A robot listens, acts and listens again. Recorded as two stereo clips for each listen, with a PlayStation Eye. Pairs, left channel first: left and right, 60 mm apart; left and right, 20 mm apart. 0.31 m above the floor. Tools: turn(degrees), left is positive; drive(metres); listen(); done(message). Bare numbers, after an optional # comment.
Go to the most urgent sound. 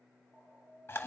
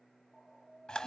# The alarm: about 40° right or 140° right.
turn(-40)
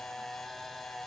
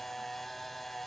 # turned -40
listen()
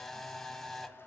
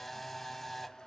listen()
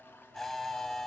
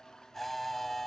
done("I heard an alarm, but can't make it out now. It was about straight ahead or 100° right. I did not reach it.")